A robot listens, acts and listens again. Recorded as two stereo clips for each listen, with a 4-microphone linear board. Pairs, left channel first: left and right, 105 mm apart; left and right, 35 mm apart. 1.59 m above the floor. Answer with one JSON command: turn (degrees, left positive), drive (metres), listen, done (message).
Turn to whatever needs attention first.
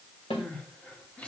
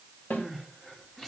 {"turn": 30}
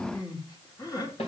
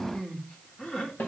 {"turn": 140}
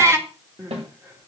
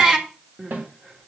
{"turn": -30}
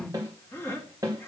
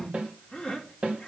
{"turn": 20}
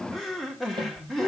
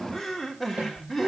{"done": "Found it: crying, straight ahead, 2 to 4 m away."}